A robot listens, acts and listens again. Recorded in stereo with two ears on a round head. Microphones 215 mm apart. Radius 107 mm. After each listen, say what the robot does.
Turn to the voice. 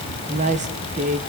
Turn 30° right.
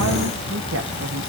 Keep listening.
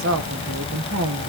Turn 120° right.
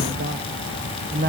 Turn 40° right.
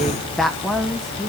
Found it: a woman speaking, straight ahead, 1 to 2 m away.